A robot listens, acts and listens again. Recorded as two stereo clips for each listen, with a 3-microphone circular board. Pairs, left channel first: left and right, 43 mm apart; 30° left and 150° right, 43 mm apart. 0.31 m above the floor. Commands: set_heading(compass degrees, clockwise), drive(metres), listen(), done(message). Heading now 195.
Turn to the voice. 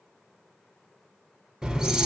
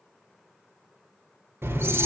listen()
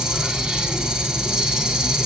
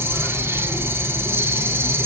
listen()
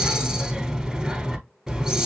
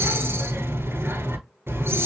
done("I can't make out anyone speaking to turn to.")